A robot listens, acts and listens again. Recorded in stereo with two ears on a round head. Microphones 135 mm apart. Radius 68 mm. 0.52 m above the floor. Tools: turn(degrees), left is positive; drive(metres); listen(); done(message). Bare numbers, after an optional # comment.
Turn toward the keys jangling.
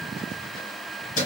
# The keys jangling: about 55° left or 125° left.
turn(55)
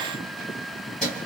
done("Found it: keys jangling, straight ahead, 2 to 4 m away.")